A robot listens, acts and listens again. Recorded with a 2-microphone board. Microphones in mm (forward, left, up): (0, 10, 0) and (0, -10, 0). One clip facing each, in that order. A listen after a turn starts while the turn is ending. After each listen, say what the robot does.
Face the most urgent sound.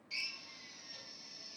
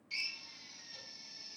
Keep listening.
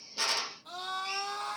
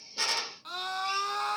Turn 55° right.
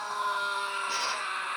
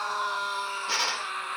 Found it: a scream, straight ahead.